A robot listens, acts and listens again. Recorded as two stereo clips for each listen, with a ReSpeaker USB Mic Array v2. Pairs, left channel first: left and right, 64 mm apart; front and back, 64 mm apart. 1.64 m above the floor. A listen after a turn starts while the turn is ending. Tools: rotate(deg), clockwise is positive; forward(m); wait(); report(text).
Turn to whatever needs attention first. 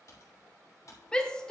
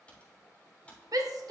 rotate(-165)
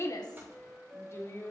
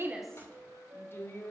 rotate(-45)
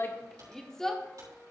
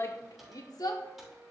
rotate(-10)
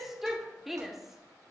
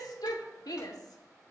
report("Facing the shout.")